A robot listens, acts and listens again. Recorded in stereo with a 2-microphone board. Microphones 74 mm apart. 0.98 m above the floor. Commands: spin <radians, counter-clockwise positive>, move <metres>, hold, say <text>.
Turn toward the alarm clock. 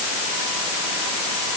hold
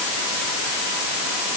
hold
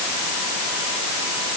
say I can't make out an alarm clock.